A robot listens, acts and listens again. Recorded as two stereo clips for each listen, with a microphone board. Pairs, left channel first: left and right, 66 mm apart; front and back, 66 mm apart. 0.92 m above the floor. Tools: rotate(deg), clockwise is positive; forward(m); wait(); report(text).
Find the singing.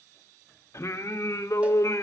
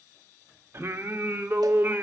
rotate(-125)
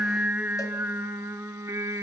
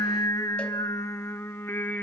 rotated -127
rotate(60)
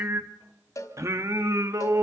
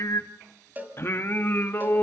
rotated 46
rotate(55)
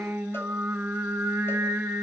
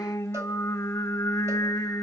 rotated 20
rotate(35)
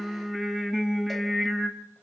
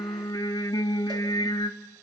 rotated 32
report("Facing the singing, 1 to 2 m away.")